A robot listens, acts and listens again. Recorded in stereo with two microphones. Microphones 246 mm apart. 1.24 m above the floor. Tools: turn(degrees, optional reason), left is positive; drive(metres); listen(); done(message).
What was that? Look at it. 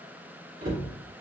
turn(degrees=-60, reason="The cupboard door: about 60° right or 120° right.")
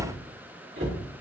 turn(degrees=-60, reason="So it is at 60° right.")
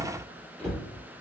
done("Facing the cupboard door.")